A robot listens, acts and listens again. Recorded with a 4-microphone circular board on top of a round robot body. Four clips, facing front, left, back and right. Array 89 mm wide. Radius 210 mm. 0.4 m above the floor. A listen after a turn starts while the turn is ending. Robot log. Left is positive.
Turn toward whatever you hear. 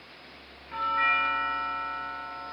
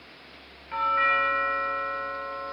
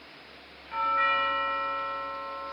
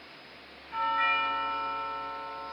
note: The doorbell: 95° left.
cmd yaw +95
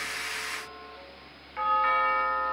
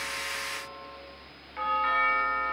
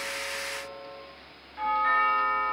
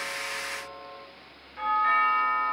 note: The doorbell is now 25° left.
cmd yaw +25
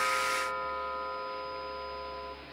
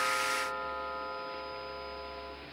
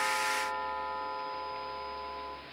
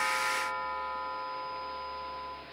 end: Facing the doorbell, 2 to 4 m away.